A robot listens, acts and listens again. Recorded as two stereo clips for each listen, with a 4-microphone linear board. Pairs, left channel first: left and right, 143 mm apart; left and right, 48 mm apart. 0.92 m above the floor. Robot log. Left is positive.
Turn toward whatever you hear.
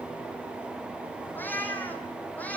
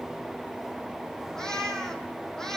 cmd yaw +30
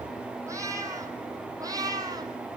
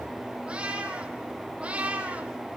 note: So it is at 25° right.
cmd yaw -25
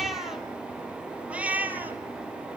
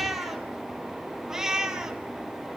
note: The cat meowing is now 10° right.
cmd yaw -10
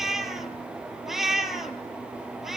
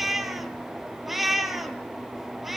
end: Facing the cat meowing.